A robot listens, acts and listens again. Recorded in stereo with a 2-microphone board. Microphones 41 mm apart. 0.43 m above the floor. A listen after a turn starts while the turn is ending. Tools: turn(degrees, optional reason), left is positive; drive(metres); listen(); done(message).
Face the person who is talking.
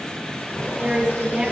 turn(degrees=-30, reason="The woman speaking: about 30° right or 150° right.")
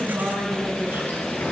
listen()
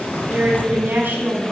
turn(degrees=-120, reason="So it is at 120° right.")
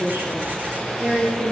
turn(degrees=-45, reason="The woman speaking is now 45° right.")
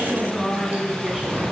turn(degrees=-15, reason="The woman speaking is now 15° right.")
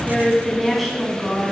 done("Facing the woman speaking, 2 to 4 m away.")